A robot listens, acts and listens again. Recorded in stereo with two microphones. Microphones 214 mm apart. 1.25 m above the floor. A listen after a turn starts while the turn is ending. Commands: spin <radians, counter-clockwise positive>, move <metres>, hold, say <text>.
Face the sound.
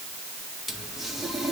spin 0.52
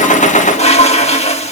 spin 2.62
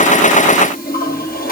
spin 0.79
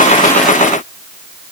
hold
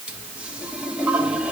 say Found it: a toilet flushing, straight ahead.